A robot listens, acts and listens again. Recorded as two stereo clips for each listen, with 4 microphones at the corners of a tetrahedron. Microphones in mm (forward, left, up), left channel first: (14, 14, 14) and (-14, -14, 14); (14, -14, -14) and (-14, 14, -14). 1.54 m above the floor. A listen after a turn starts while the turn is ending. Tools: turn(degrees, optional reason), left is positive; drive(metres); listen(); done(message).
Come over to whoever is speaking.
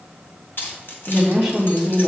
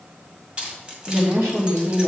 turn(degrees=140, reason="The woman speaking: 140° left.")
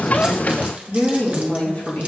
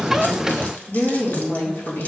turn(degrees=-10, reason="The woman speaking is now 10° right.")
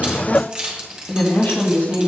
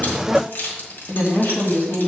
drive(metres=1.0)
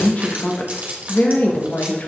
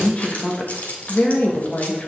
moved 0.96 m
drive(metres=1.0)
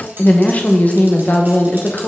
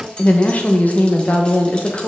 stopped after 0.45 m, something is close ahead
done("Arrived at the woman speaking, straight ahead.")